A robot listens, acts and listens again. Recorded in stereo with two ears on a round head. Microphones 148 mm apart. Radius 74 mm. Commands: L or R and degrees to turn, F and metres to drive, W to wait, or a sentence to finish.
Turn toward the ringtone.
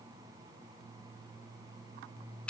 W
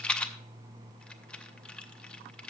W
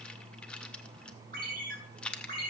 R60
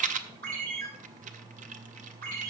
R60
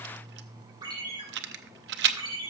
R30
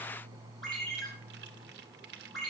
Found it: a ringtone, straight ahead.